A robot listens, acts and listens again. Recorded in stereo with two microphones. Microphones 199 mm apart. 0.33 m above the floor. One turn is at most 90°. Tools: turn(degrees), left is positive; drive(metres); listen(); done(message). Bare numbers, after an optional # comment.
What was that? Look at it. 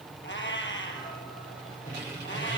# The cat meowing: about 65° left or 115° left.
turn(65)
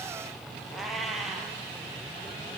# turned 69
done("Facing the cat meowing.")